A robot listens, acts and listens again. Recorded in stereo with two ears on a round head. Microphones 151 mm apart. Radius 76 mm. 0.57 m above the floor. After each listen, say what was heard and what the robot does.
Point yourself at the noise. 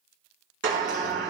Turn 90° right.
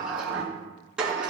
Found it: a sliding door, straight ahead.